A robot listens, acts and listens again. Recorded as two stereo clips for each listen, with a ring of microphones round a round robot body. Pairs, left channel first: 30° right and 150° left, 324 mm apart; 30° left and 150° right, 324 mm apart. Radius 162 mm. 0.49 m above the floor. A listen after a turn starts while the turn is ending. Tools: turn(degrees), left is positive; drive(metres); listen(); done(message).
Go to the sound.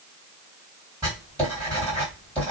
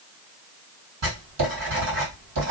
turn(degrees=-115)
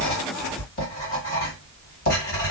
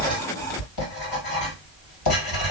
turn(degrees=30)
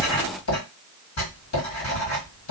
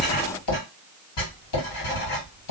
turn(degrees=15)
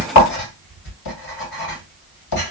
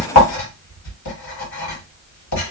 drive(metres=1.0)
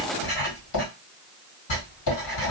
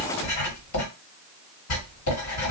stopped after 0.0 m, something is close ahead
done("Blocked. The writing is further on, straight ahead.")